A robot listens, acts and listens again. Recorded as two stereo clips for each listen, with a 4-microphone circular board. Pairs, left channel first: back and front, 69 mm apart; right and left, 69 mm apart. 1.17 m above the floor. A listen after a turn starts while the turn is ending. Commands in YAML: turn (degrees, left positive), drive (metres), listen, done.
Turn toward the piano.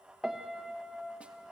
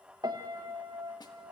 turn: 85
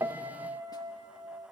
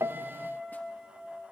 done: "Facing the piano, 1 to 2 m away."